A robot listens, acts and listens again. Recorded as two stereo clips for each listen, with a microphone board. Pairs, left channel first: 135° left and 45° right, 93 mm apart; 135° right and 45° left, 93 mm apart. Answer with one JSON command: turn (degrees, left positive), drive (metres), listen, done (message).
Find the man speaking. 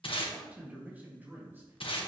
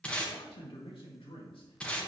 {"turn": -110}
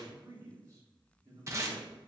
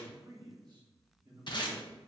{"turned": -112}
{"turn": 10}
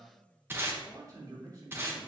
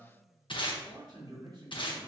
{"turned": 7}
{"done": "Facing the man speaking, over 4 m away."}